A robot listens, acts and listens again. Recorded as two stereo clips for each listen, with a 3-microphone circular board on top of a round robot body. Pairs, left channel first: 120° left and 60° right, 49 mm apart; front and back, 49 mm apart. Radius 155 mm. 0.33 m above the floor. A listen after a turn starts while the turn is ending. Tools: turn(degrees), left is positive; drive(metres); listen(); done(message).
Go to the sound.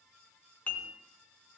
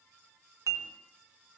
turn(degrees=175)
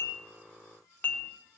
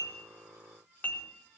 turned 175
turn(degrees=60)
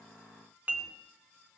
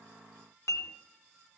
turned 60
drive(metres=1.0)
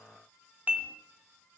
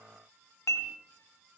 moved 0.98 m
drive(metres=1.0)
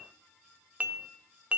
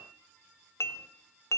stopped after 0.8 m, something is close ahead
done("Arrived at the dishes clattering, straight ahead.")